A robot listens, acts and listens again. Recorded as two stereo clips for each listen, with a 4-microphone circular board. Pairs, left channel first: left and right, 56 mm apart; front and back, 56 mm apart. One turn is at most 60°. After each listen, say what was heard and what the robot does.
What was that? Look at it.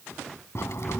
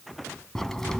The crack: 80° left. Turn 60° left.
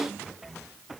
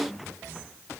Nothing new. It was at 20° left. Turn 20° left.
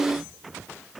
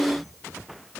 I heard a crack from this way, but can't make it out now.